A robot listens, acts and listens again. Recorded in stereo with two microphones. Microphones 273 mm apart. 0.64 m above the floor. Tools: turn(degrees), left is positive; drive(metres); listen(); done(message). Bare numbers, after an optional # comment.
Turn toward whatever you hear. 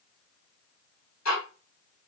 turn(90)
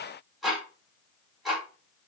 done("Found it: ticking, straight ahead, 1 to 2 m away.")